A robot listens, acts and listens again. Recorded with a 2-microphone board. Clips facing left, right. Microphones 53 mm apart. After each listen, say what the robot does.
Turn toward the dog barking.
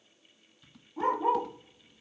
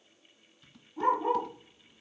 Turn 20° left.
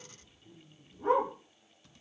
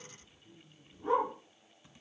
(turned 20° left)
Turn 135° left.
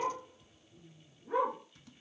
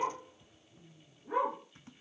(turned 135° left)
Found it: a dog barking, straight ahead.